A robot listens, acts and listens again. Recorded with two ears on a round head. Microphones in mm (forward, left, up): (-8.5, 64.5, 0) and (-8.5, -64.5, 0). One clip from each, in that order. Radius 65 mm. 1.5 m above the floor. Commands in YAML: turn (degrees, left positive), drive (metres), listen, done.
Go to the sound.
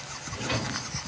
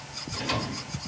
turn: -65
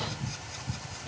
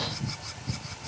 turn: -10
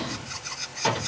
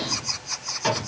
drive: 1.0
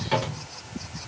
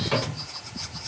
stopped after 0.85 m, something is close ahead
done: "Arrived at the drawer, straight ahead."